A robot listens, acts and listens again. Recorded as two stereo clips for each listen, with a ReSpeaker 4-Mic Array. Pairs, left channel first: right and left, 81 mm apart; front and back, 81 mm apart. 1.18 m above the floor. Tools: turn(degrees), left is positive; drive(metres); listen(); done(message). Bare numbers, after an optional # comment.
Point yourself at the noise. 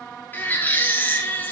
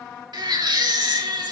# The baby crying: 155° right.
turn(-155)
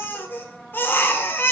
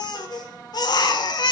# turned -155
# The baby crying is now 30° right.
turn(-30)
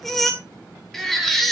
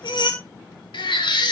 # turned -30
done("Found it: a baby crying, straight ahead, 2 to 4 m away.")